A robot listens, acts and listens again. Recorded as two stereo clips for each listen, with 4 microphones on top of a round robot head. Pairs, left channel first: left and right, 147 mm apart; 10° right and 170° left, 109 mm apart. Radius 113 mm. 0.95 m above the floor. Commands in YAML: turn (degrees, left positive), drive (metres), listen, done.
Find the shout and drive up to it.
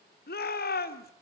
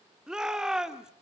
turn: 90
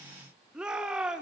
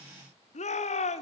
drive: 1.0
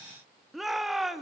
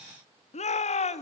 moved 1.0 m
drive: 1.0
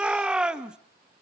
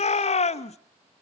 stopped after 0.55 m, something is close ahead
done: "I am next to the shout."